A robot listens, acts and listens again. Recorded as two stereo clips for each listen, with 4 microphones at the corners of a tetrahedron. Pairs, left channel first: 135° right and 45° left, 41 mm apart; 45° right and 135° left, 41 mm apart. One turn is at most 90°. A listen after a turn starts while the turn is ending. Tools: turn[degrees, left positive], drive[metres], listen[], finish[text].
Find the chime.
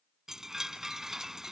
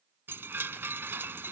Thought: The chime: 125° left.
Action: turn[90]
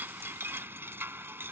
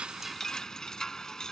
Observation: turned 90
Thought: The chime is now 35° left.
Action: turn[35]
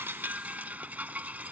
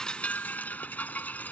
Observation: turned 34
Action: finish[Facing the chime.]